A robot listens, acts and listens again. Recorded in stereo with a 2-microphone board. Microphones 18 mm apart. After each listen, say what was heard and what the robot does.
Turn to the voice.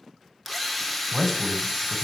Turn 30° left.
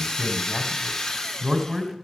So it is at 25° right. Turn 25° right.
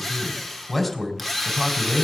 Found it: a man speaking, straight ahead, 2 to 4 m away.